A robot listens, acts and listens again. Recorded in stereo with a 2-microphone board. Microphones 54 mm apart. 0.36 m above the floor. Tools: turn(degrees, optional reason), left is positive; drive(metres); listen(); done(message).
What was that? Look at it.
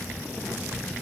listen()
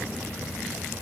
listen()
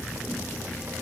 done("I can't make out anything.")